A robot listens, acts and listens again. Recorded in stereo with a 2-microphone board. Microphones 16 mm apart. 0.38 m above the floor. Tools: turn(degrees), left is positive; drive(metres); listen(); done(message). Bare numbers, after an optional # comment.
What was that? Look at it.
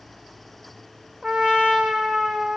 # The trumpet: about 65° right or 115° right.
turn(-65)
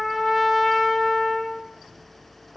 done("Found it: a trumpet, straight ahead, 2 to 4 m away.")